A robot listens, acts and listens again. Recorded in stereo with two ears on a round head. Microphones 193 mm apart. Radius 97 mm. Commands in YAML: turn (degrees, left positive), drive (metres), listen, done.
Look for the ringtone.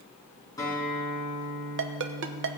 turn: -60
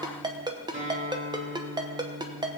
turn: -25
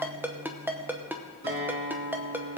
turn: -10
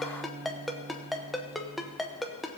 done: "Facing the ringtone."